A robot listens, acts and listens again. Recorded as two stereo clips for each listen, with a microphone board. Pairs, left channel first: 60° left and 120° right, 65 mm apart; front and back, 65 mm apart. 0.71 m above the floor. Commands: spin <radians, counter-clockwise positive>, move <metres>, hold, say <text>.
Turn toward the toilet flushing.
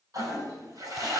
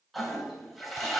spin -1.57
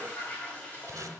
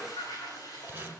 spin -0.17
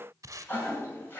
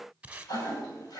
say Facing the toilet flushing, 2 to 4 m away.